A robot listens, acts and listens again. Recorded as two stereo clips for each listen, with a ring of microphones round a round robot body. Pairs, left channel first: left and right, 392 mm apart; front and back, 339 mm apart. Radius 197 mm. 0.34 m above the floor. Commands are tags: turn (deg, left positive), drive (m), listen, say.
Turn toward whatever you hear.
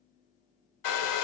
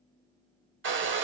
<turn deg="125"/>
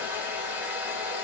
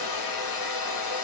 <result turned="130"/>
<say>Found it: a hair dryer, straight ahead, under 1 m away.</say>